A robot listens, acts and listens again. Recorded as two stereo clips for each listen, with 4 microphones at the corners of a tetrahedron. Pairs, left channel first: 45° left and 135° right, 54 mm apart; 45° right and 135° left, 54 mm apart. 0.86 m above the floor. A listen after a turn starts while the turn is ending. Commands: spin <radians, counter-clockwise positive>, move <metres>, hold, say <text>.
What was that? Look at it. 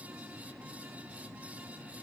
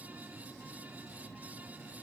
hold
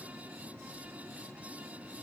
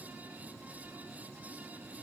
hold
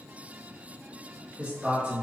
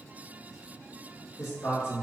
spin -1.31
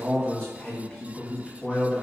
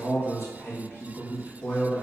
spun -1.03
spin -0.26
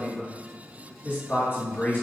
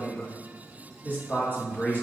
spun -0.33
say Found it: a man speaking, straight ahead, 1 to 2 m away.